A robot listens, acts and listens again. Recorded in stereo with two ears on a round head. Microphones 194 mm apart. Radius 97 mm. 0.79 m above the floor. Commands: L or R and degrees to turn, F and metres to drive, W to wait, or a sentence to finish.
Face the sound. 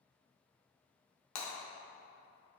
L90
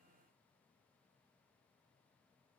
I heard breaking glass from this way, but can't make it out now.